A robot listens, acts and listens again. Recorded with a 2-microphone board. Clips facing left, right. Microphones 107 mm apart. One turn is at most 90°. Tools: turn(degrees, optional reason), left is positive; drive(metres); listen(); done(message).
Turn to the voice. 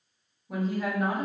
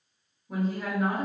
turn(degrees=30)
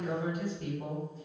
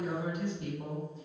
turn(degrees=-30, reason="So it is at 30° right.")
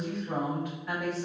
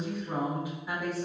turn(degrees=-10, reason="The woman speaking is now 10° right.")
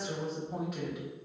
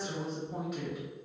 done("Facing the woman speaking, 1 to 2 m away.")